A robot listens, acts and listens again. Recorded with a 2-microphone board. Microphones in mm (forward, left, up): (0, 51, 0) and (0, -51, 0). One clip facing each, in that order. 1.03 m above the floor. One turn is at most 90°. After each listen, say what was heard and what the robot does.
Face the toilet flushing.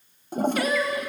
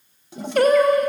The toilet flushing: about 50° left or 130° left. Turn 50° left.
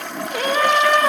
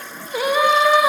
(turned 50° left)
So it is at 75° left. Turn 75° left.
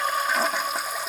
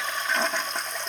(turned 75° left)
Facing the toilet flushing, under 1 m away.